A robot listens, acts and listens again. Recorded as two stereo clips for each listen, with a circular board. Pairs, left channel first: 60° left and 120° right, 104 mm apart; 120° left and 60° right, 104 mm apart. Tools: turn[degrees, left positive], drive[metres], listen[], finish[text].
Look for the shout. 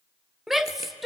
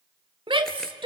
Thought: The shout: 35° right.
Action: turn[-35]
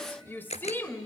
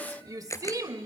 Thought: The shout is now 10° right.
Action: turn[-10]
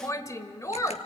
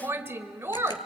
Action: finish[Found it: a shout, straight ahead.]